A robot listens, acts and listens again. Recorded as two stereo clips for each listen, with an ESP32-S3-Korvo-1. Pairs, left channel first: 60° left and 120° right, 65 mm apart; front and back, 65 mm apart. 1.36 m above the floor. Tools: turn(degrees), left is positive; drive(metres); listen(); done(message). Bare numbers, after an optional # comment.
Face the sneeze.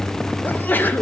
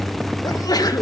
done("Found it: a sneeze, straight ahead, 1 to 2 m away.")